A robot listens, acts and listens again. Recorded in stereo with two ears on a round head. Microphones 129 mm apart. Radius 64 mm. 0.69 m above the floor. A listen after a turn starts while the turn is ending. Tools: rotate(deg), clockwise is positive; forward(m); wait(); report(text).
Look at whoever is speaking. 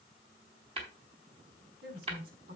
rotate(90)
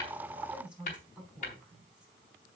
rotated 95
rotate(10)
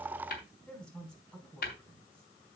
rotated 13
report("Facing the woman speaking.")